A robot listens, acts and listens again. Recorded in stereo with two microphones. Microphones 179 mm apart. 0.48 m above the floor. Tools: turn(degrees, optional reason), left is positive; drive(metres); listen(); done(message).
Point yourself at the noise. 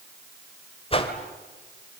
turn(degrees=35, reason="The whoosh: about 35° left or 145° left.")
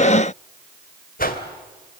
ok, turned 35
turn(degrees=105, reason="So it is at 105° left.")
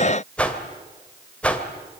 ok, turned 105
done("Found it: a whoosh, straight ahead, 2 to 4 m away.")